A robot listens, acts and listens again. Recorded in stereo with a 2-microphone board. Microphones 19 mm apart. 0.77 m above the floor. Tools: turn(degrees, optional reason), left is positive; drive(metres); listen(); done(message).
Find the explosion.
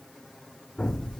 turn(degrees=35, reason="The explosion: about 35° left or 145° left.")
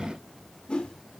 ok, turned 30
listen()
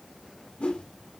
done("I heard an explosion, but can't make it out now. It was about 5° left or 115° left.")